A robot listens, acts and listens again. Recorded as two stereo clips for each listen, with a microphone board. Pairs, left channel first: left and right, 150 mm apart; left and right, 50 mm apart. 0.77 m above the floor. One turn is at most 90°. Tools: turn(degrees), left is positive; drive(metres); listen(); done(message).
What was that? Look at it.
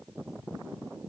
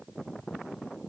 listen()
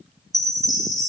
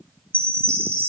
turn(degrees=25)
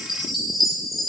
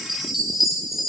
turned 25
done("Found it: a chime, straight ahead, over 4 m away.")